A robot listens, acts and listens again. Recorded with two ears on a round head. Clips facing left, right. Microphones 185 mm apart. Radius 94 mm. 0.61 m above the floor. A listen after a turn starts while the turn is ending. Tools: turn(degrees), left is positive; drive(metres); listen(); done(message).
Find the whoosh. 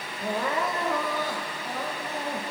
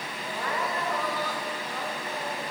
listen()
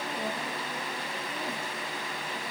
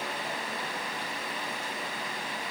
listen()
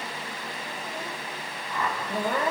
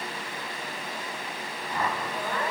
turn(degrees=-30)
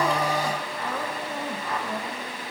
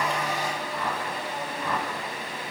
turn(degrees=-120)
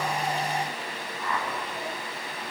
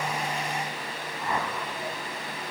turn(degrees=-25)
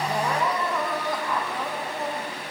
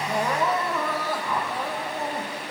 done("Facing the whoosh.")